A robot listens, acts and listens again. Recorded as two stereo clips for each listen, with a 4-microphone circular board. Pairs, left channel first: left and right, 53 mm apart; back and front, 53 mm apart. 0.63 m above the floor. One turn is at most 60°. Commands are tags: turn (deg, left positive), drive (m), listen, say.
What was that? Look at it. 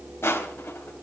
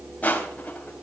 <turn deg="60"/>
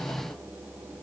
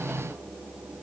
<turn deg="60"/>
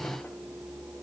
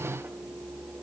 <listen/>
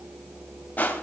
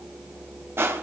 <turn deg="35"/>
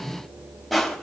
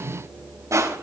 <say>Facing the crushing, 2 to 4 m away.</say>